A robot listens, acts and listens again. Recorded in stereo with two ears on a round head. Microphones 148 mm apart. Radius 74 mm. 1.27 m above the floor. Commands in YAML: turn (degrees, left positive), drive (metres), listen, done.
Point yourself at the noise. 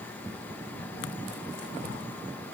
listen: true
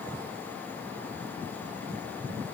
listen: true
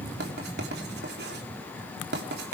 turn: -70
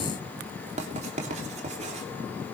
turn: -40
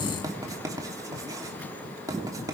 turn: -20
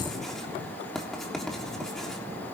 done: "Found it: writing, straight ahead."